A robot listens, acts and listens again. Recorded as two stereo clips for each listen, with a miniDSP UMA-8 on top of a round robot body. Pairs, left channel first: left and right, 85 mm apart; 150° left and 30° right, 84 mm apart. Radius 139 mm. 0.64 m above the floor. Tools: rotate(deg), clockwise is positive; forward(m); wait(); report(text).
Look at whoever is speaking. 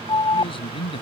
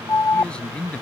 rotate(-75)
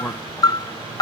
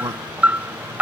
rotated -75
wait()
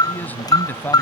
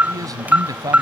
rotate(-20)
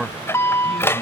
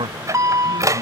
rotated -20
report("Facing the man speaking.")